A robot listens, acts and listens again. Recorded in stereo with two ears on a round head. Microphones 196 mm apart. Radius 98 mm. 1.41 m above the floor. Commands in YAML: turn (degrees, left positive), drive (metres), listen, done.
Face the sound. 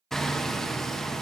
turn: 30
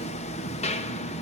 turn: 150
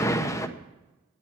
turn: 15
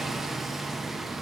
done: "Facing the hammering, under 1 m away."